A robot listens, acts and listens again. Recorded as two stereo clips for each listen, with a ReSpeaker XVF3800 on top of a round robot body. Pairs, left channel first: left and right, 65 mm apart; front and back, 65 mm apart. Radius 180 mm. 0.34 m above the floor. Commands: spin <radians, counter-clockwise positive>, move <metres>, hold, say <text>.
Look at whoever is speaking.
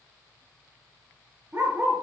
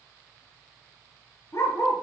hold
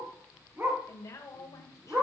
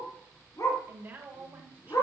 spin 2.09
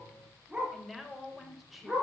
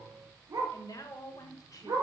say Facing the woman speaking.